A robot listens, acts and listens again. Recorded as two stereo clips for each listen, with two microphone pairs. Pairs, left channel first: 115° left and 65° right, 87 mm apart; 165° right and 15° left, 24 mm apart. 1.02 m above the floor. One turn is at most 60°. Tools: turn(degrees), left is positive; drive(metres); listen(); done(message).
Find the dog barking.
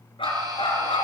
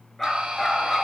turn(degrees=60)
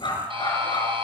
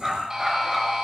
turn(degrees=60)
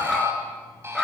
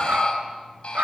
turn(degrees=25)
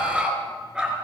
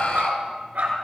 turn(degrees=15)
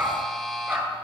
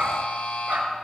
done("Facing the dog barking.")